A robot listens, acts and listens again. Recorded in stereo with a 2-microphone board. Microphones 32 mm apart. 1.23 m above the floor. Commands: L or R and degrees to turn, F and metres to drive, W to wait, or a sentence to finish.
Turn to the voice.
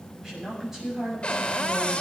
R30
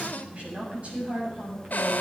R140
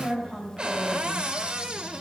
L10
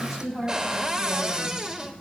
Found it: a woman speaking, straight ahead, over 4 m away.